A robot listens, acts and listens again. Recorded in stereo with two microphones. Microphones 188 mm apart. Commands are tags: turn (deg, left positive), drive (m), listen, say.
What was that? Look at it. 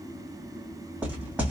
<turn deg="-30"/>
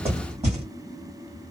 <turn deg="-145"/>
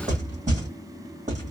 <turn deg="-45"/>
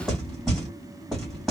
<say>Found it: knocking, straight ahead.</say>